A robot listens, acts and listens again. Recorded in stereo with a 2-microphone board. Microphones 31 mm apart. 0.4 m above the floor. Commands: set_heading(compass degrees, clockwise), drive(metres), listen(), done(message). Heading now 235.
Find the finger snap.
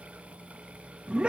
listen()
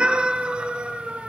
listen()
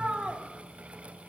done("I can't make out a finger snap to turn to.")